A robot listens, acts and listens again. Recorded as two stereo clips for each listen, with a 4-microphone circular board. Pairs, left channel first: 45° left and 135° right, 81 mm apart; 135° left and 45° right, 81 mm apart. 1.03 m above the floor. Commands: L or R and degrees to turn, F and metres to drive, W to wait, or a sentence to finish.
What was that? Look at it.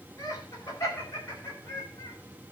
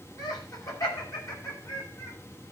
L95
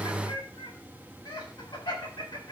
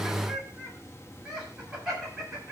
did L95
L40
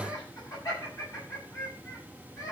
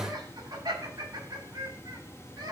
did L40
Found it: laughter, straight ahead.